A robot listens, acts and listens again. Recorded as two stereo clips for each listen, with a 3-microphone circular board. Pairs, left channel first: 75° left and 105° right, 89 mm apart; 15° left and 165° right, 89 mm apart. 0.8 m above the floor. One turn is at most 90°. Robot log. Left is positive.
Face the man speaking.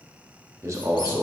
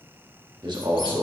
note: The man speaking: 150° right.
cmd yaw -90
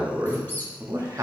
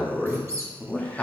note: The man speaking is now 55° right.
cmd yaw -55
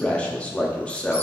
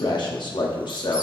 end: Facing the man speaking.